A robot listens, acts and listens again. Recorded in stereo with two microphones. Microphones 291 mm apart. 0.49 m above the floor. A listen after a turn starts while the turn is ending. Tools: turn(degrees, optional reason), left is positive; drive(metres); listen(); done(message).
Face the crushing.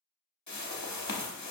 listen()
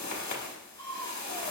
turn(degrees=-65, reason="The crushing: about 65° right or 115° right.")
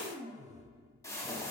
turn(degrees=-10, reason="So it is at 10° right.")
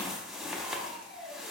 done("Found it: crushing, straight ahead, under 1 m away.")